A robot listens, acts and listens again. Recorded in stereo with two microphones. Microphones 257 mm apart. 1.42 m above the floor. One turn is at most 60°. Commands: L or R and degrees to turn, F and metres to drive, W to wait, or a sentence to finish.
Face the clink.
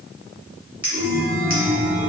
L60
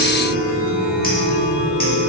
L30
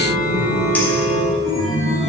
W
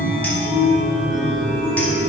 Facing where the clink came from. I can't hear it now.